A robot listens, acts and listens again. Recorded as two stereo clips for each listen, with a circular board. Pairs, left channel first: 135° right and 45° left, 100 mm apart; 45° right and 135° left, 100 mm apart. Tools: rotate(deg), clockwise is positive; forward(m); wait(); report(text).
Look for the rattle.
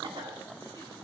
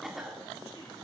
wait()
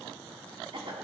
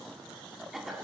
wait()
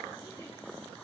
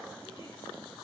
report("I can't make out a rattle to turn to.")